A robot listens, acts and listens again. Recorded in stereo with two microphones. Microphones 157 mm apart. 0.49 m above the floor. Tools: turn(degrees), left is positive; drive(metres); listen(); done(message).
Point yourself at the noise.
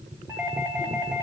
turn(degrees=-15)
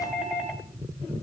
done("Facing the doorbell, over 4 m away.")